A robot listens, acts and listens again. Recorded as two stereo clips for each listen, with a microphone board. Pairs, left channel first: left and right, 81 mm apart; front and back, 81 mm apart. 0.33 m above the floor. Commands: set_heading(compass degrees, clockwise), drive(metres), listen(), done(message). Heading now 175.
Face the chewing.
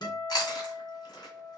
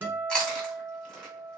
set_heading(95)
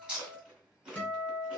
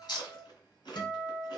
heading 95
set_heading(105)
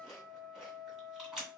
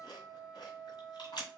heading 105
done("Facing the chewing.")